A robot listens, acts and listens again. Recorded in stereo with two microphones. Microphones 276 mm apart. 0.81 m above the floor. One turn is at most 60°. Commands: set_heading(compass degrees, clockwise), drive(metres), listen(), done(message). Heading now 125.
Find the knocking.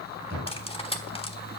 set_heading(175)
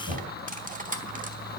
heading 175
set_heading(235)
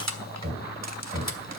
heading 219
set_heading(259)
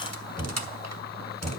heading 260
done("Facing the knocking.")